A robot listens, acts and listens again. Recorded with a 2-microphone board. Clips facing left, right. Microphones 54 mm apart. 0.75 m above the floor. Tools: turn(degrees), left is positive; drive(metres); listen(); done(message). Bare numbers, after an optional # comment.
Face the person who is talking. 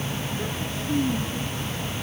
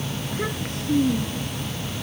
# The child speaking: about 70° right or 110° right.
turn(-70)
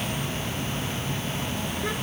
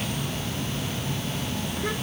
listen()
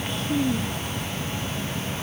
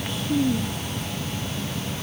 done("Found it: a child speaking, straight ahead.")